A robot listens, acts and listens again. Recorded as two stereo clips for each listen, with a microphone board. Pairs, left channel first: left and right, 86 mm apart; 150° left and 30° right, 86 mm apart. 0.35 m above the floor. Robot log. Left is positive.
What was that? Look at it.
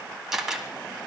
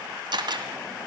end: Found it: a camera shutter, straight ahead.